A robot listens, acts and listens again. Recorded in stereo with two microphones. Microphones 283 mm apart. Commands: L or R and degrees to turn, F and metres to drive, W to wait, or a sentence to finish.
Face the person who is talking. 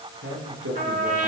R55
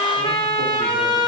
W
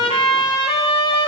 W
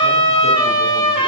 I heard a man speaking, but can't make it out now. It was about straight ahead or 70° right.